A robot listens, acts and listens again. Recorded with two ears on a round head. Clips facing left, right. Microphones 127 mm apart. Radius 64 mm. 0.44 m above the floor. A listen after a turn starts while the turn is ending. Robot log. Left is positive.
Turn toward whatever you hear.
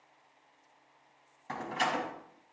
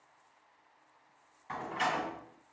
note: The door slam: about 50° left or 130° left.
cmd yaw +50
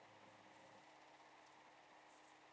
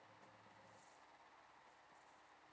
cmd idle
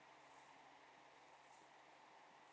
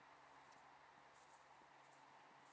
end: I heard a door slam, but can't make it out now. It was about straight ahead or 80° left.